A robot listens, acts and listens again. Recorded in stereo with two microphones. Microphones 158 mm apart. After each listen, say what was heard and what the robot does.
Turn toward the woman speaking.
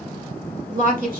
The woman speaking: about 55° right or 125° right. Turn 55° right.
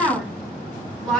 Found it: a woman speaking, straight ahead.